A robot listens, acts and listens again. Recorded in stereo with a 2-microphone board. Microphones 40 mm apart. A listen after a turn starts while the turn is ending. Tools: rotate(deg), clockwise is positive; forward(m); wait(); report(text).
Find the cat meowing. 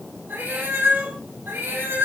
rotate(90)
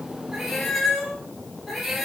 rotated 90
report("Facing the cat meowing, over 4 m away.")